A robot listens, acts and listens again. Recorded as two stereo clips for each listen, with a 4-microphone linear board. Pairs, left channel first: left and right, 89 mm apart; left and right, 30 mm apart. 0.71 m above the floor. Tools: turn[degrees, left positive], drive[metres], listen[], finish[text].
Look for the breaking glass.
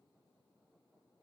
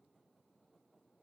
Action: listen[]
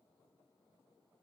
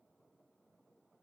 Action: listen[]
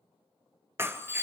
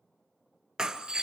Thought: The breaking glass: about 25° right or 155° right.
Action: turn[-25]
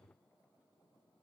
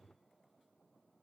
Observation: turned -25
Action: listen[]
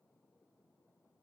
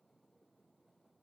Action: finish[I heard breaking glass, but can't make it out now. It was about straight ahead or 130° right.]